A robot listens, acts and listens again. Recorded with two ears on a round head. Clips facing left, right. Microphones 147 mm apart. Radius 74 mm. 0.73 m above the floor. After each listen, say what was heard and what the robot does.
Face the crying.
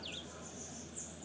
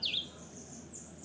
Keep listening.
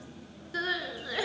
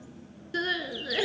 The crying: about 30° right or 150° right. Turn 30° right.
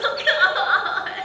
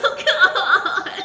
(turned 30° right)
So it is at 120° right. Turn 120° right.
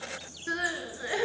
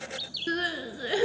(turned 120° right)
The crying is now 40° right. Turn 40° right.
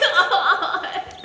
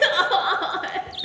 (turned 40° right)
The crying is now 10° right. Turn 10° right.
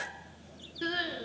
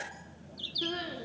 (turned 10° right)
Found it: crying, straight ahead.